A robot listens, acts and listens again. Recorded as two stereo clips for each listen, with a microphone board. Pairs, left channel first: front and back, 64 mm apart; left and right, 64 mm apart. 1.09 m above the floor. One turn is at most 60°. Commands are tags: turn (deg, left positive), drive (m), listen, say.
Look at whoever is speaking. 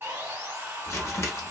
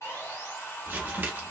<listen/>
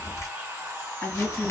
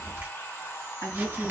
<turn deg="50"/>
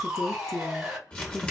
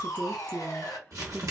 <turn deg="15"/>
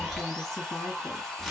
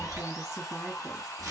<listen/>
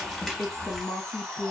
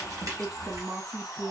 <say>Found it: a woman speaking, straight ahead.</say>